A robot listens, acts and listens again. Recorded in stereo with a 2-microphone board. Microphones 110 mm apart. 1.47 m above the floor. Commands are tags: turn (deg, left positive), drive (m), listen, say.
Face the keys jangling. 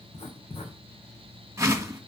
<listen/>
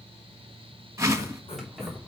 <turn deg="30"/>
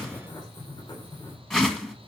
<listen/>
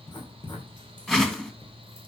<listen/>
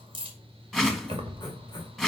<turn deg="-50"/>
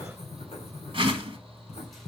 <listen/>
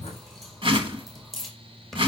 <say>Found it: keys jangling, straight ahead.</say>